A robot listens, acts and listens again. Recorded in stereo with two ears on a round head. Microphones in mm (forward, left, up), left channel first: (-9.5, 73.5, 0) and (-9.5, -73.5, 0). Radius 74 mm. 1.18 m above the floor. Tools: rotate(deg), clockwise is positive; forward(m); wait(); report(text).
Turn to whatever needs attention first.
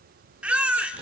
rotate(30)
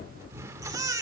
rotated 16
rotate(155)
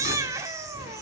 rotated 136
rotate(20)
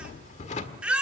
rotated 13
report("Facing the baby crying, 2 to 4 m away.")